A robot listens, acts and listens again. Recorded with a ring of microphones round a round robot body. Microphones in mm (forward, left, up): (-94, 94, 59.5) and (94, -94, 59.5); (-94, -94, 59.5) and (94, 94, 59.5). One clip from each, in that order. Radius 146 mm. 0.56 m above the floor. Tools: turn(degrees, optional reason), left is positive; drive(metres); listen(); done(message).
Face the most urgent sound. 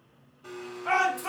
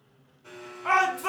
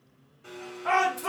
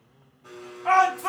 turn(degrees=-25, reason="The shout: 25° right.")
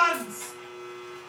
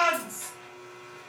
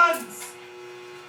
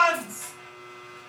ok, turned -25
done("Found it: a shout, straight ahead, 1 to 2 m away.")